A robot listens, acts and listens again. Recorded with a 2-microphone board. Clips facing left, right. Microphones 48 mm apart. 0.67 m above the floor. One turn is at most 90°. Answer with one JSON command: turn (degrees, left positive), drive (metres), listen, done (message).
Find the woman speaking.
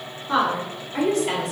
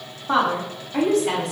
{"turn": -50}
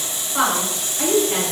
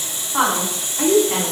{"turn": -70}
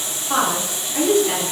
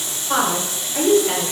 {"turn": -15}
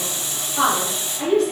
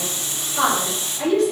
{"done": "Found it: a woman speaking, straight ahead, 2 to 4 m away."}